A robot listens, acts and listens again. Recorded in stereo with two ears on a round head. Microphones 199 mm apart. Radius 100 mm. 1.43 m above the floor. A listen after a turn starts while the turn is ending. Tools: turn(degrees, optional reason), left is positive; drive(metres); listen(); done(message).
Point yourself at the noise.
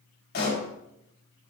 turn(degrees=50, reason="The pop: about 50° left or 130° left.")
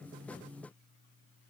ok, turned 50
listen()
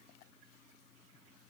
done("I heard a pop, but can't make it out now. It was about straight ahead or 80° left.")